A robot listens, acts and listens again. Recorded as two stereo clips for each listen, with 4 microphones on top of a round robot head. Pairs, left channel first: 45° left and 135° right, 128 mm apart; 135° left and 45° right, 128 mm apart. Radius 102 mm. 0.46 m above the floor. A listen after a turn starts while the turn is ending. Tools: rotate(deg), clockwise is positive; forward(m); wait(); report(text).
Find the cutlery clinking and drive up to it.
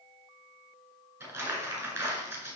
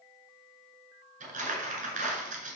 wait()
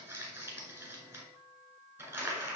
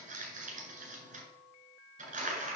wait()
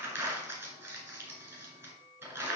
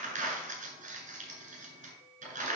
report("I can't make out cutlery clinking to turn to.")